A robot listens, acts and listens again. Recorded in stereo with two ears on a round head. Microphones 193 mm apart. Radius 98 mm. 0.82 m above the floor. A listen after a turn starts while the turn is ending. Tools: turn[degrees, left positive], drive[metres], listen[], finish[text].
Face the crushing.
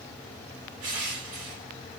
Action: turn[-90]
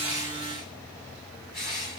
Action: finish[Facing the crushing.]